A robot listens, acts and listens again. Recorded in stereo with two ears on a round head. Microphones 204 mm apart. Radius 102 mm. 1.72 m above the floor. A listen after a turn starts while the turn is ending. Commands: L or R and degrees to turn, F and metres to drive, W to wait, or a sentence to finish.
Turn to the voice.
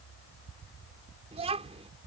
R30
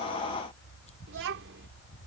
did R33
R120
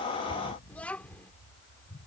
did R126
Found it: a child speaking, straight ahead.